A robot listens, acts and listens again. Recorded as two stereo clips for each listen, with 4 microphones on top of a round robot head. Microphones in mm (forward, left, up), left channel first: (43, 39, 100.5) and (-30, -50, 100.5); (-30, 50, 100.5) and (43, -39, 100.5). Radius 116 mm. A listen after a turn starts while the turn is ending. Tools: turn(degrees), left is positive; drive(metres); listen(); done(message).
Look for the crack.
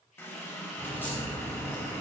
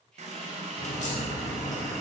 turn(degrees=125)
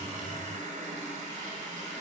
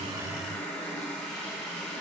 done("I heard a crack from this way, but can't make it out now.")